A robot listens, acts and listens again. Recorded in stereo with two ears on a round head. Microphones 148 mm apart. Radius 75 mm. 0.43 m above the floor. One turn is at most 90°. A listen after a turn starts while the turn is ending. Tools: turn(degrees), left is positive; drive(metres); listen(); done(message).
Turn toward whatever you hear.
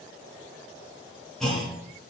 turn(degrees=30)
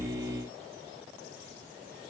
listen()
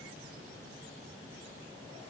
done("I heard a clunk, but can't make it out now. It was about 25° right or 145° left.")